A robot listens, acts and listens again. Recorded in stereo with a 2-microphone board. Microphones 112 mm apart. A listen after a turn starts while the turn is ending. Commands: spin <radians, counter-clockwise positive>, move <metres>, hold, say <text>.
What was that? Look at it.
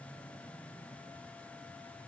hold
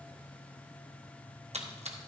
spin -1.31
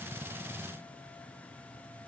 hold
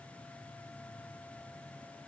say I heard a splash, but can't make it out now. It was about straight ahead or 30° right.